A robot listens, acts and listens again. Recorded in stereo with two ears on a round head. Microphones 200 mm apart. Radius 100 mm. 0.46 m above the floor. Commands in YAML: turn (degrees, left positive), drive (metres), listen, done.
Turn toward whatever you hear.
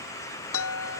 turn: 60
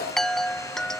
done: "Found it: a chime, straight ahead."